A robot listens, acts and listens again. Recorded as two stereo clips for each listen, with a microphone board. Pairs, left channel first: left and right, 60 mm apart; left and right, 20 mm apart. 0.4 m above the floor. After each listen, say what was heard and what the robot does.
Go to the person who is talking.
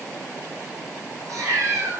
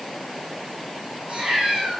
Keep listening.
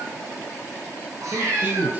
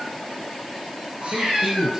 The man speaking: about 30° right or 150° right. Turn 30° right.
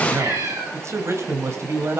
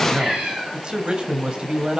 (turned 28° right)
So it is at 120° right. Turn 120° right.
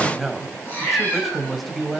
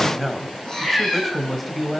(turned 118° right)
Drive 1.0 m forward.
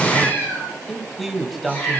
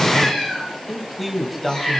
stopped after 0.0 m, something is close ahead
Something is in my way. I am facing the man speaking but have not reached it.